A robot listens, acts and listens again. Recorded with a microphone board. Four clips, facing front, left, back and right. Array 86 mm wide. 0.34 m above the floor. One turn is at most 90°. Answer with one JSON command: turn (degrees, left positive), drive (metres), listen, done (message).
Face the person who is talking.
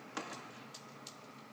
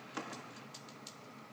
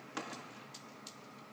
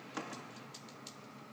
{"listen": true}
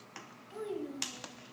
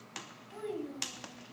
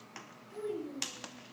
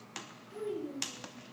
{"turn": 55}
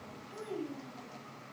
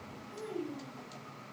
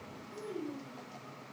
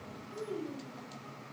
{"turn": 20}
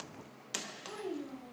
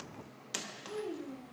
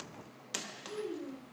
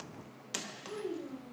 {"done": "Found it: a child speaking, straight ahead."}